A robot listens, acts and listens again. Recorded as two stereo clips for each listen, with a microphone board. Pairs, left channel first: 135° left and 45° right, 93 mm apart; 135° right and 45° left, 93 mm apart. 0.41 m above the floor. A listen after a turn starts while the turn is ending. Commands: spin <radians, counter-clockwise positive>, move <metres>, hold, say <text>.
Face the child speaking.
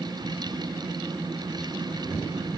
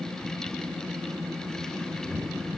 hold
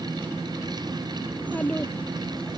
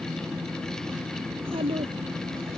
spin 1.05
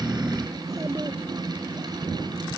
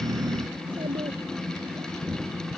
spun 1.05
hold
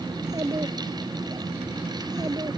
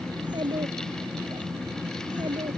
say Facing the child speaking.